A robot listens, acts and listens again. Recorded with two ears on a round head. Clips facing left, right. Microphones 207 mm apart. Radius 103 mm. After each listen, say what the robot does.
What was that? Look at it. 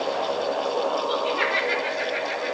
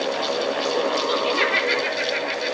Turn 60° right.
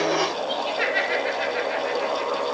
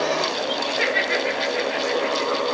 Found it: laughter, straight ahead, over 4 m away.